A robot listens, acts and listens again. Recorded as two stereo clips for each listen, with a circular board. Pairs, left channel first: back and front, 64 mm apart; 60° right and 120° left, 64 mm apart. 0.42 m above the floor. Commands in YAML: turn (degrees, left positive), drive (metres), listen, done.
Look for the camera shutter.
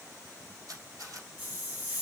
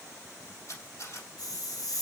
turn: -25
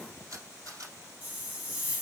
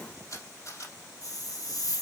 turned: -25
turn: -30
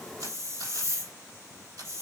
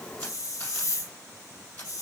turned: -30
done: "Found it: a camera shutter, straight ahead, 2 to 4 m away."